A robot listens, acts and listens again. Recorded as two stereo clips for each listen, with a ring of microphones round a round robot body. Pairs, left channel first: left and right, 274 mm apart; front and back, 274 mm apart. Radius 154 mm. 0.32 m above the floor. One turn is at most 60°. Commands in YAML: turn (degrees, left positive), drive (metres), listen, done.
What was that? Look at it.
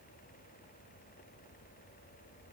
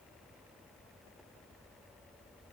listen: true
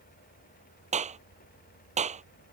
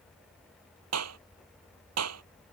turn: -60
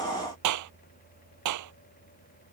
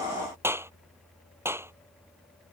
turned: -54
turn: -60
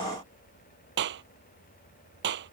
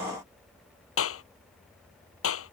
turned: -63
turn: -35
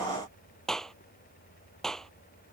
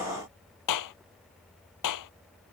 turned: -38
done: "Facing the clap."